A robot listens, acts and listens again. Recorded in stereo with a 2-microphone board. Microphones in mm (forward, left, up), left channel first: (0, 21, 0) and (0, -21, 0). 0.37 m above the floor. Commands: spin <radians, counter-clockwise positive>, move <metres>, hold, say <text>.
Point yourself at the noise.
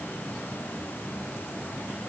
hold
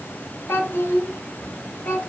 spin 1.05
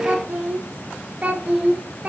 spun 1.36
spin -0.35
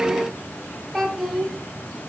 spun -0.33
say Found it: a child speaking, straight ahead.